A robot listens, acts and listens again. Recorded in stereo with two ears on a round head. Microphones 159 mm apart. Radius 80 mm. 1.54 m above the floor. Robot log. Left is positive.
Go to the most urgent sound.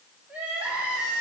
cmd yaw -30
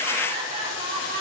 note: So it is at 145° right.
cmd yaw -145
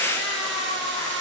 note: The crying is now 25° left.
cmd yaw +25
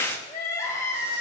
note: The crying is now 15° left.
cmd yaw +15
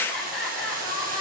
cmd fwd 1.0
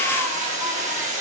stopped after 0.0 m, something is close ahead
cmd idle
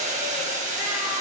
cmd idle
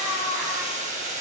end: Something is in my way. I am facing the crying but have not reached it.